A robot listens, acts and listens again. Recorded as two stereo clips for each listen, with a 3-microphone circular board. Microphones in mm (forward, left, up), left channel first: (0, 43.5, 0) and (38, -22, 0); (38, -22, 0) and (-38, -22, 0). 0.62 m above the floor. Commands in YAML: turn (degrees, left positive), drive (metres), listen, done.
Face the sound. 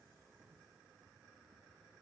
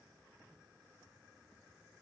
listen: true
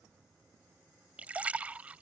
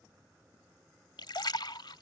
turn: 10
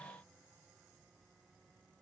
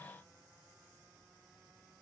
done: "Facing where the splash came from. I can't hear it now."